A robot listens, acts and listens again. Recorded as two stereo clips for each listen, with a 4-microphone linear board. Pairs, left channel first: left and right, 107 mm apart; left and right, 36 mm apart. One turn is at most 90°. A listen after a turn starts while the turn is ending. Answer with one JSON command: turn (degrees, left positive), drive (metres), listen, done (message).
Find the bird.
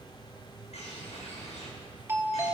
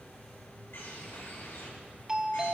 {"turn": 90}
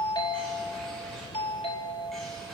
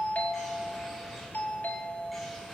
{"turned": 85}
{"done": "Facing the bird, over 4 m away."}